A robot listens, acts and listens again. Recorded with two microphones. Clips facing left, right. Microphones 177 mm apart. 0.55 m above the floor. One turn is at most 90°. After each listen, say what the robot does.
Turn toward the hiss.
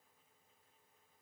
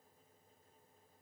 Keep listening.
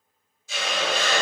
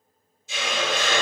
Turn 20° right.
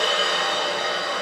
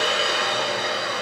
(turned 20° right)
Facing the hiss, 1 to 2 m away.